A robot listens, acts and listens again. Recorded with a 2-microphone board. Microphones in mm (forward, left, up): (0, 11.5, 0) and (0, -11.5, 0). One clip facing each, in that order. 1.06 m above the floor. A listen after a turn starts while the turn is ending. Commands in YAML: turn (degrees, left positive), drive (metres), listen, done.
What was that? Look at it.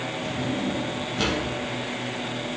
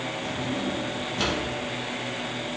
turn: 30
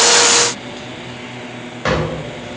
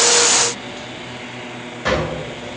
turn: 150
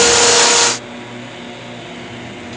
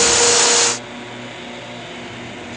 listen: true
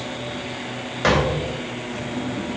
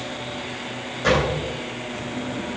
turn: 45
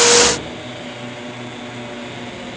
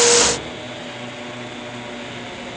listen: true
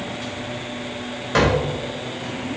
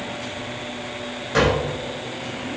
turn: 20
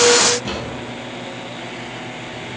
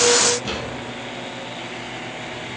done: "Facing the drawer."